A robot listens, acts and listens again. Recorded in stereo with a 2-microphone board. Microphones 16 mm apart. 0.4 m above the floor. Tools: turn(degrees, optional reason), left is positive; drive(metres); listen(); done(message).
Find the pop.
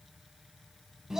listen()
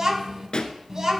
turn(degrees=60, reason="The pop: about 60° left or 120° left.")
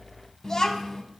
listen()
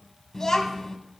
done("I heard a pop, but can't make it out now. It was about straight ahead or 60° left.")